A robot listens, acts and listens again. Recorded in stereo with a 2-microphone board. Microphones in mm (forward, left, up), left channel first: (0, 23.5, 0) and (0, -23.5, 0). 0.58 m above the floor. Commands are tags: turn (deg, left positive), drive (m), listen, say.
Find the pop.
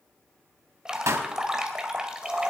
<turn deg="-90"/>
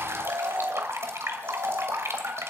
<say>I heard a pop from this way, but can't make it out now.</say>